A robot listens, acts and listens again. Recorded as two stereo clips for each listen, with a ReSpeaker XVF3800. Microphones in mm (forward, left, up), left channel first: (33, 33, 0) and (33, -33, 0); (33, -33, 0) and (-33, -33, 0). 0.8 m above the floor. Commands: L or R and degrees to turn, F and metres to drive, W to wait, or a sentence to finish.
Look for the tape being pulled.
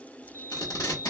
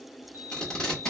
L75
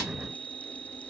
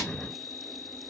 W
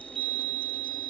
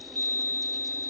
W
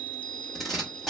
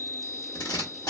Facing the tape being pulled.